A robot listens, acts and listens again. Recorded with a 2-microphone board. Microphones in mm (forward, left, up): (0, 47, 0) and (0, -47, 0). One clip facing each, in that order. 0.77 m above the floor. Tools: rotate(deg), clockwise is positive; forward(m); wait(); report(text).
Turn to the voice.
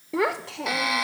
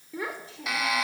rotate(-90)
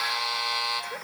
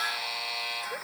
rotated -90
wait()
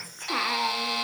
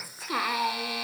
report("Found it: a child speaking, straight ahead.")